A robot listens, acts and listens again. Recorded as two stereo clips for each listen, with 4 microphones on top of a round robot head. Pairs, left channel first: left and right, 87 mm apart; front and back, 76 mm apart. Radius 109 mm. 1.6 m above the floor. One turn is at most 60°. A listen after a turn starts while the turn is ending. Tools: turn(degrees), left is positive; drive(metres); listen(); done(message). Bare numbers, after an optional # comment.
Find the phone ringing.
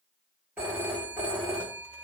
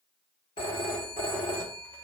# The phone ringing: 15° right.
turn(-15)
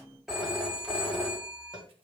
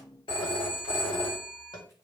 done("Facing the phone ringing.")